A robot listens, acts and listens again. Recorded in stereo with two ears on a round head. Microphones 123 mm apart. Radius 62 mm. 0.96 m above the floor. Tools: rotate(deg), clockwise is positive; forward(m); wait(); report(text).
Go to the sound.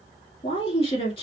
rotate(-40)
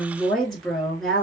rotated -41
forward(1.0)
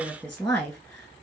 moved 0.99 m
forward(1.0)
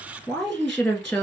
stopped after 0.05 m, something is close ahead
report("I am next to the woman speaking.")